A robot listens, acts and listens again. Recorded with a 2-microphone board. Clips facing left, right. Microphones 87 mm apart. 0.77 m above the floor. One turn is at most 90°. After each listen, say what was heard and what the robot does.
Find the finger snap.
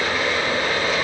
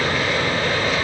Keep listening.
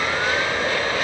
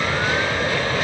Keep listening.
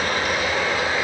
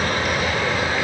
I can't make out a finger snap to turn to.